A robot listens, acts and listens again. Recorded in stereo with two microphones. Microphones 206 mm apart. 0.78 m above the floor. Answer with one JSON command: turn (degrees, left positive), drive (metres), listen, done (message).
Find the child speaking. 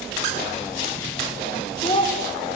{"turn": 25}
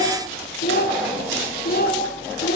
{"turn": 130}
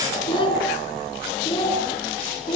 {"turn": 25}
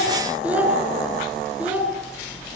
{"done": "Found it: a child speaking, straight ahead."}